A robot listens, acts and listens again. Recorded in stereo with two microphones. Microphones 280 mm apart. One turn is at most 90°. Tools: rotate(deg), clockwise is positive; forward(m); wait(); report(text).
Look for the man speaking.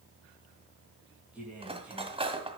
rotate(30)
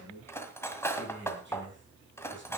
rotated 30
rotate(90)
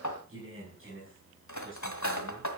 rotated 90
rotate(45)
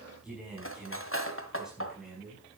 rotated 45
report("Facing the man speaking.")